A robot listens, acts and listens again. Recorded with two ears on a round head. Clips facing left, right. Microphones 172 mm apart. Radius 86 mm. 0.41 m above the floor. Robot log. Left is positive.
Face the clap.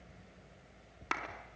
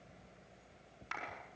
note: The clap: about 70° left or 110° left.
cmd yaw +70
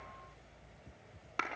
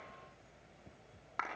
note: So it is at 35° left.
cmd yaw +35
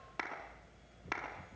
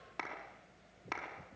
end: Facing the clap, over 4 m away.